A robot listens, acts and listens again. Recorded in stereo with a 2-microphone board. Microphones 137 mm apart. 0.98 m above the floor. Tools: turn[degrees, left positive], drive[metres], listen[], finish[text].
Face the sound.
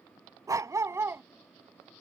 Action: turn[-30]
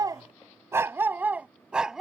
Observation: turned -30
Action: turn[-30]
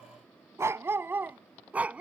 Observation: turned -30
Action: turn[-30]
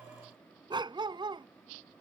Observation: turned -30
Thought: So it is at 145° right.
Action: turn[-145]
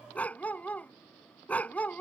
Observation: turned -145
Thought: The dog barking is now 10° left.
Action: turn[10]
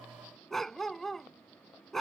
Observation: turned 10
Action: finish[Found it: a dog barking, straight ahead.]